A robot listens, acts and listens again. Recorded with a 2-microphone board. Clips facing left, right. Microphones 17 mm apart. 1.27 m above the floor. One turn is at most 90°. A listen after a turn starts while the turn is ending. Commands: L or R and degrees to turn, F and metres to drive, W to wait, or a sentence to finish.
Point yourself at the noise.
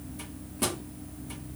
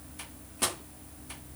R15
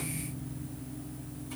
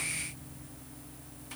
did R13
W
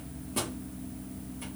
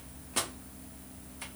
R90
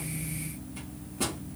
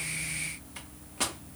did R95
R55
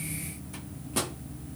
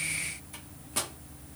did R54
Found it: a microwave, straight ahead, 1 to 2 m away.